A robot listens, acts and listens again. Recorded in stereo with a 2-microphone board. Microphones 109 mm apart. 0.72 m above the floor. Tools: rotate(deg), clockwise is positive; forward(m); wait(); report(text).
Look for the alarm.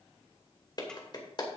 wait()
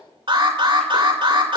rotate(50)
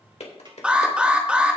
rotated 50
rotate(10)
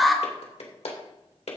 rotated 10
report("Facing the alarm, 2 to 4 m away.")